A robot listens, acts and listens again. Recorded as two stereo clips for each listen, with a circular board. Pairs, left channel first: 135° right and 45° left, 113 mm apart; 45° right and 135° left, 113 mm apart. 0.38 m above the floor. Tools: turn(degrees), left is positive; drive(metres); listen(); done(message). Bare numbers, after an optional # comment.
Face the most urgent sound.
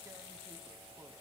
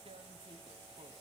listen()
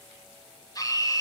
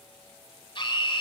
# The scream: 85° right.
turn(-85)
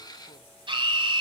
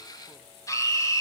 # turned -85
# The scream is now 10° left.
turn(10)
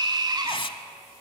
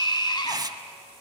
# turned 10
done("Facing the scream.")